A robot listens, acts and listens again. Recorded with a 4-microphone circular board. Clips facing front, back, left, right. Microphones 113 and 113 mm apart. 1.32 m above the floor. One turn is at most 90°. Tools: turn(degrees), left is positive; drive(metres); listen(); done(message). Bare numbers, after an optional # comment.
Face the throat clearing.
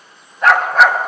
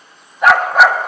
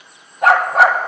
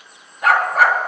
listen()
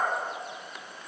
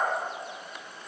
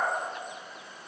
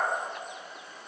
listen()
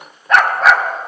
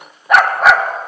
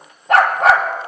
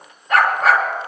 done("I can't make out throat clearing to turn to.")